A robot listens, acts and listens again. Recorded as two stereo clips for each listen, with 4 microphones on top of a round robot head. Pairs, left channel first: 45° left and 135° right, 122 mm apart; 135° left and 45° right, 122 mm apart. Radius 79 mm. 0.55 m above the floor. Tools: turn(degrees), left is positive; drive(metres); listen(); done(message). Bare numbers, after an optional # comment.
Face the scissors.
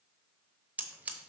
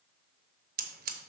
# The scissors: 55° right.
turn(-55)
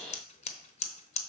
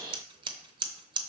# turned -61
# The scissors is now 10° left.
turn(10)
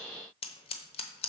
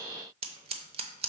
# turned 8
done("Found it: scissors, straight ahead, under 1 m away.")